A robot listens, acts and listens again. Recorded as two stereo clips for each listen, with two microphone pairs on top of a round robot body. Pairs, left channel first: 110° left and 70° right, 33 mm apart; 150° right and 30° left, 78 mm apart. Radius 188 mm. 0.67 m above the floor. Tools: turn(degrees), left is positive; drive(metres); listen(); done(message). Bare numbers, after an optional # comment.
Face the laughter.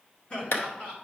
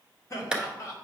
# The laughter: 165° left.
turn(165)
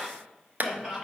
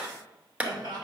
done("Facing the laughter.")